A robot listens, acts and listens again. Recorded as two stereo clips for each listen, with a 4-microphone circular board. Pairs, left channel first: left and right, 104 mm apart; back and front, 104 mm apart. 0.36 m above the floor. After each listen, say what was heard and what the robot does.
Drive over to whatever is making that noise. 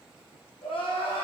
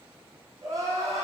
The crying: 60° left. Turn 60° left.
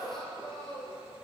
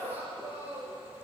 Drive 1.0 m forward.
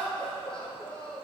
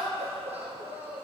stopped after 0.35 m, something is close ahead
The crying is now 10° left. Turn 10° left.
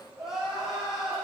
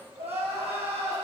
Blocked. The crying is further on, straight ahead.